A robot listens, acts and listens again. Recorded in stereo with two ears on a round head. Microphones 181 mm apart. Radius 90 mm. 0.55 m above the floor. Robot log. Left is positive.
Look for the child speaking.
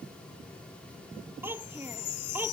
cmd yaw -30
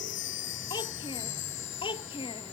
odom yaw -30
note: So it is at 25° left.
cmd yaw +25
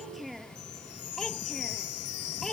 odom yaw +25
end: Facing the child speaking.